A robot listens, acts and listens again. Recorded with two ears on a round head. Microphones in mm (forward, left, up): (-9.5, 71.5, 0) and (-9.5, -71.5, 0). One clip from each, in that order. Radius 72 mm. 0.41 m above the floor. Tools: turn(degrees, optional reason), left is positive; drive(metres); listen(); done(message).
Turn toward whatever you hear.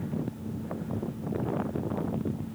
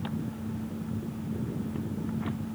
listen()
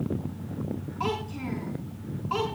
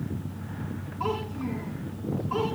turn(degrees=60, reason="The child speaking: about 60° left or 120° left.")
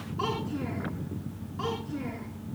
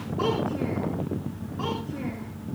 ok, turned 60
listen()
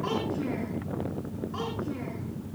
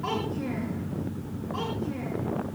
listen()
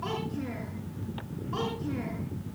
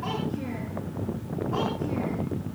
done("I heard a child speaking, but can't make it out now. It was about straight ahead or 60° left.")